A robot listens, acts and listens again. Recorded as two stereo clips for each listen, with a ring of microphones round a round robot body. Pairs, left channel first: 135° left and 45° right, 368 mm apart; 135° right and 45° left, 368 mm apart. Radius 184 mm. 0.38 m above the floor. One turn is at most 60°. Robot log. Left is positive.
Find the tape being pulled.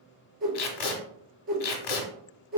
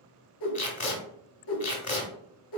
note: The tape being pulled: 155° left.
cmd yaw +60
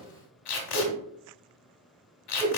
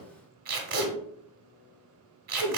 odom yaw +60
note: The tape being pulled is now 110° left.
cmd yaw +60
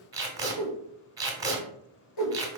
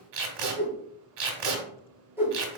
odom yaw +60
note: The tape being pulled is now 35° left.
cmd yaw +35
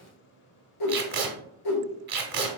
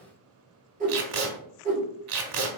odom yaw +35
note: The tape being pulled is now 20° left.
cmd yaw +20
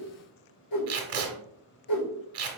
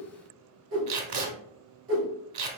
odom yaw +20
end: Facing the tape being pulled.